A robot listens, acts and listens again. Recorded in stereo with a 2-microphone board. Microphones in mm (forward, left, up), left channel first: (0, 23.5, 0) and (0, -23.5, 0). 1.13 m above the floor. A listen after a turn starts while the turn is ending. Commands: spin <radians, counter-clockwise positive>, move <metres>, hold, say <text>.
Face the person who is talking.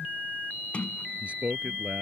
spin -0.52
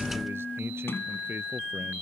hold
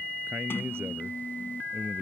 hold
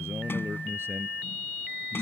say I heard a man speaking, but can't make it out now. It was about straight ahead or 120° right.